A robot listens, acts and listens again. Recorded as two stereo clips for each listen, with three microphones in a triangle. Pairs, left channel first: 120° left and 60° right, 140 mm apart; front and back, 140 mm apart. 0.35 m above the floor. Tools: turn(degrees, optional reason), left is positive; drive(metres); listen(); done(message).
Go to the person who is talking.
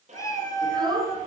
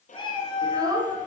turn(degrees=-120, reason="The child speaking: 120° right.")
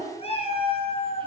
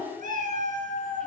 turn(degrees=-10, reason="The child speaking is now 10° right.")
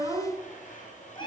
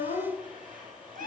drive(metres=1.0)
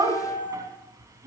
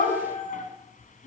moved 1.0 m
drive(metres=1.0)
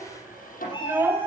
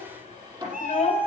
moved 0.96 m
turn(degrees=10, reason="The child speaking is now 10° left.")
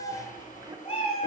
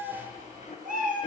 listen()
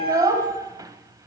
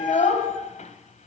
drive(metres=1.0)
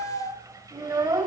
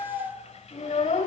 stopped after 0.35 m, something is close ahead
done("Arrived at the child speaking, straight ahead.")